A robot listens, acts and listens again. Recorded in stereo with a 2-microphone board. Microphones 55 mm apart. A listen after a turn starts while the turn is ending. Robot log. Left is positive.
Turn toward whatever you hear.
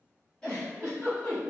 note: The giggle: about 15° left or 165° left.
cmd yaw +15
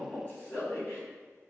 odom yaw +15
note: So it is at 150° left.
cmd yaw +150
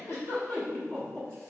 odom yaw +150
note: The giggle is now 15° left.
cmd yaw +15
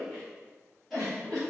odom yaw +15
end: Facing the giggle, 1 to 2 m away.